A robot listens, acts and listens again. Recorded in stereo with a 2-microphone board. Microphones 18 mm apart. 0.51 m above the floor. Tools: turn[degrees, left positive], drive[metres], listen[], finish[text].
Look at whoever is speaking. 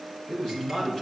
Thought: The man speaking: about 35° left or 145° left.
Action: turn[35]
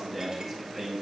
Action: finish[Found it: a man speaking, straight ahead.]